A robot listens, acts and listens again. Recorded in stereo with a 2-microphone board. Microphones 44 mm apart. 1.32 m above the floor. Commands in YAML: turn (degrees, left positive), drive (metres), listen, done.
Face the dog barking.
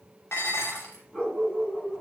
turn: 15
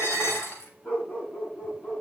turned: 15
turn: 40
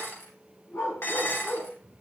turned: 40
turn: 100
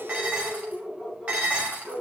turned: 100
done: "Found it: a dog barking, straight ahead."